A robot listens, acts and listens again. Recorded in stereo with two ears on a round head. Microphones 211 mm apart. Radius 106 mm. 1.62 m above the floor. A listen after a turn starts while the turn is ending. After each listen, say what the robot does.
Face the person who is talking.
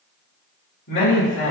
Turn 50° left.
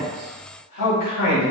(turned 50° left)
Turn 80° left.
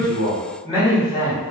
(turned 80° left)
Turn 20° left.
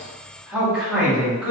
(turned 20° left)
Facing the man speaking.